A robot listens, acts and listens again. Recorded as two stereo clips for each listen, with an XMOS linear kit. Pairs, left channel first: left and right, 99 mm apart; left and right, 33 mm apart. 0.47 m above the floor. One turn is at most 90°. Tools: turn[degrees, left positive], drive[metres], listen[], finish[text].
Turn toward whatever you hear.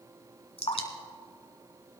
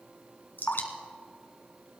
Action: turn[90]
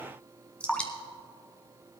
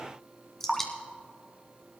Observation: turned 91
Thought: So it is at 10° left.
Action: turn[10]
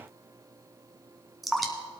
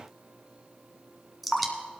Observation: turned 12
Action: finish[Facing the dripping, 1 to 2 m away.]